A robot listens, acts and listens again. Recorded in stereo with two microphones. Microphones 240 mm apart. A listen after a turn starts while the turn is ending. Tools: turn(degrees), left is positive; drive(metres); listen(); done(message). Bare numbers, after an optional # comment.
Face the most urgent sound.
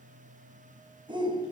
# The shout: about 20° right or 160° right.
turn(-20)
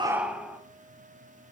done("Facing the shout, 1 to 2 m away.")